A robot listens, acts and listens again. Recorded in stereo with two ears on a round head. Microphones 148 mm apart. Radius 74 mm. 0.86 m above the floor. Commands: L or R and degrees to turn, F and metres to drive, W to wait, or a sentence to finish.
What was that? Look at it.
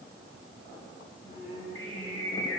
R30
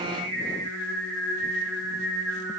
Found it: singing, straight ahead, 2 to 4 m away.